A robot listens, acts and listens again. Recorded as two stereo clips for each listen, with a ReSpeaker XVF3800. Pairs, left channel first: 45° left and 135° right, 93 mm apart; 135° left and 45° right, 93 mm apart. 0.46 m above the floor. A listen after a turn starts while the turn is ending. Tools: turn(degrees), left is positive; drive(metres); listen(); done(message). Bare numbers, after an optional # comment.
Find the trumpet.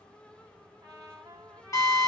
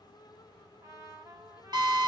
# The trumpet: 90° right.
turn(-90)
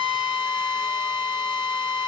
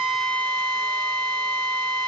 listen()
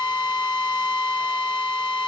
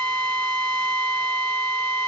listen()
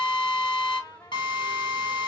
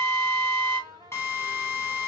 done("Found it: a trumpet, straight ahead.")